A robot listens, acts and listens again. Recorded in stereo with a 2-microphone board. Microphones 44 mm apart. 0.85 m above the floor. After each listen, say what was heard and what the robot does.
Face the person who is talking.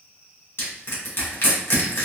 Keep listening.
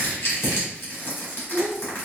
The child speaking: about 45° right or 135° right. Turn 45° right.
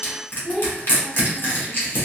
Facing the child speaking, 1 to 2 m away.